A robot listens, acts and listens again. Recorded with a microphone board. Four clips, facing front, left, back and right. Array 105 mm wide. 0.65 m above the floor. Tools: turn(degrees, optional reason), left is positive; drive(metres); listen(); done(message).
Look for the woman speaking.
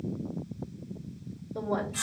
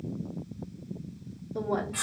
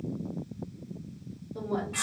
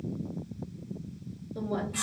turn(degrees=80, reason="The woman speaking: 80° left.")
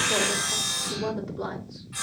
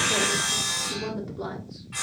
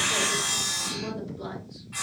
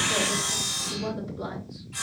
turn(degrees=30, reason="The woman speaking is now 30° left.")
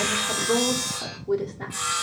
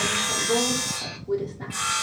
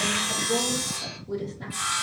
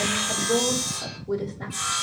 done("Found it: a woman speaking, straight ahead.")